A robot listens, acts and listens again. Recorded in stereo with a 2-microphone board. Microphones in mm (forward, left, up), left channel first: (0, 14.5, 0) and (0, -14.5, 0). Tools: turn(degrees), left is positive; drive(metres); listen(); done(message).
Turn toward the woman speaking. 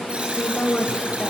turn(degrees=30)
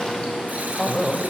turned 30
done("Found it: a woman speaking, straight ahead, 2 to 4 m away.")